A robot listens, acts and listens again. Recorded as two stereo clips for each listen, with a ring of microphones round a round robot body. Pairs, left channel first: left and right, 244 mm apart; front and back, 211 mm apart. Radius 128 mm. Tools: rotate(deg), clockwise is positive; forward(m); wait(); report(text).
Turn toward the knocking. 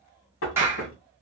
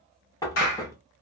rotate(-70)
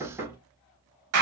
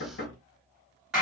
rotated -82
rotate(10)
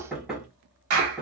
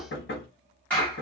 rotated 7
report("Facing the knocking.")